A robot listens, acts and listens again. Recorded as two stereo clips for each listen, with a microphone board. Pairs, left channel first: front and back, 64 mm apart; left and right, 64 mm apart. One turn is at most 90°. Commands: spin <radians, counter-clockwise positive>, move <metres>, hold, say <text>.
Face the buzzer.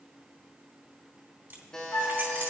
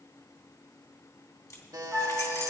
spin -1.40
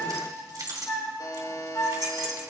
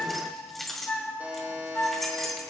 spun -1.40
spin -0.44
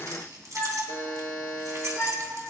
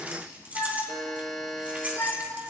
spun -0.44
say Found it: a buzzer, straight ahead, 1 to 2 m away.